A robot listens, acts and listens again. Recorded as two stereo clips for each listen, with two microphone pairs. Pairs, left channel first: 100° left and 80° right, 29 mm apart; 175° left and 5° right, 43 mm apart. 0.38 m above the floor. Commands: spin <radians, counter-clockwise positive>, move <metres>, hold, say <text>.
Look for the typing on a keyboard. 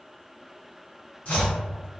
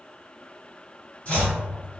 hold
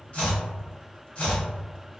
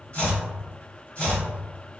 hold
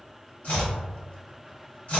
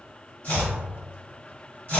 say I can't make out typing on a keyboard to turn to.